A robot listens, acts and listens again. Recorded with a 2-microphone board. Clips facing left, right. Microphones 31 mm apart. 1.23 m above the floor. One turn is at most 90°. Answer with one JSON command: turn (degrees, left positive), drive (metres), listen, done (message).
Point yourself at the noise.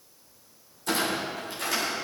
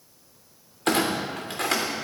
{"turn": -75}
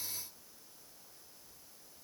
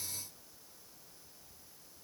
{"listen": true}
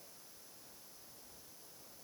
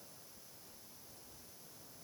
{"done": "I heard a clunk, but can't make it out now. It was about straight ahead or 30° right."}